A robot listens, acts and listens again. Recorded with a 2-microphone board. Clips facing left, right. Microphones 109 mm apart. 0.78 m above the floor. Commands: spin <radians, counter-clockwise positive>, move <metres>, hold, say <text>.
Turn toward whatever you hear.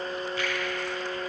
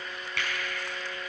spin -1.57
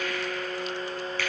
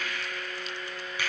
spin -0.17
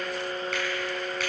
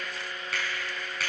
say Facing the finger snap, over 4 m away.